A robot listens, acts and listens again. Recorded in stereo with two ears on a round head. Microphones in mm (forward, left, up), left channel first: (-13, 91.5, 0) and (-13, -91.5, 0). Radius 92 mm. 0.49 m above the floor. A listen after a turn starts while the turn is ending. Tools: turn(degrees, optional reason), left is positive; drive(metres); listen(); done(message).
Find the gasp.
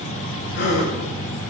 turn(degrees=50, reason="The gasp: about 50° left or 130° left.")
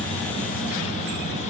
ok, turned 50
listen()
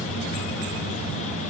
done("I heard a gasp, but can't make it out now. It was about straight ahead or 80° left.")